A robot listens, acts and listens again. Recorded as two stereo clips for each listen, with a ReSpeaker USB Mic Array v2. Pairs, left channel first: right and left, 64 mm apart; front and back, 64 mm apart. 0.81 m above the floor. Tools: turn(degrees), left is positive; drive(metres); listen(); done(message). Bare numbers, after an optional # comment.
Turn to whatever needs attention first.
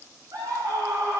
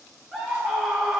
# The scream: 95° left.
turn(95)
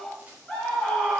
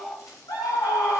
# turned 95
done("Found it: a scream, straight ahead, over 4 m away.")